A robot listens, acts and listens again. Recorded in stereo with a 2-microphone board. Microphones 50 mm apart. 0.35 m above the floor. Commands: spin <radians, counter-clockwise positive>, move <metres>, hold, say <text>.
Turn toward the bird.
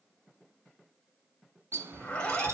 spin -1.05
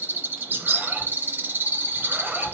spin -0.87
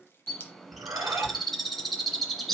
say Found it: a bird, straight ahead, under 1 m away.